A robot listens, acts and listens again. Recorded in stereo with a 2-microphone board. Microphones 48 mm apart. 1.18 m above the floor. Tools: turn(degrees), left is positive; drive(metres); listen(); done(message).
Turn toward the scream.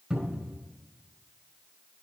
listen()
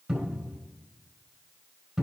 listen()
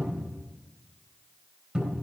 done("I can't make out a scream, only a cupboard door.")